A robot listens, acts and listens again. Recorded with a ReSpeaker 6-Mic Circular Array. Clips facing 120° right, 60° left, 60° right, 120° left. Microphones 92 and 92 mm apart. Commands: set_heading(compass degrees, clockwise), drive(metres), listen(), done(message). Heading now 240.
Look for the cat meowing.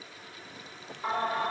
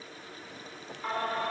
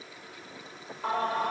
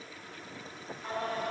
listen()
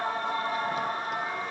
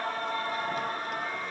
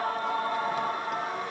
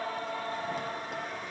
listen()
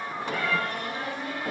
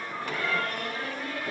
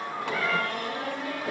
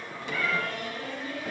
set_heading(25)
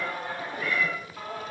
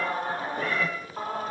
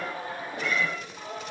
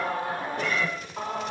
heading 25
set_heading(15)
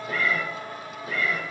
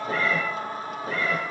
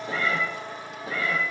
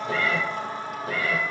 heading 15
done("Found it: a cat meowing, straight ahead.")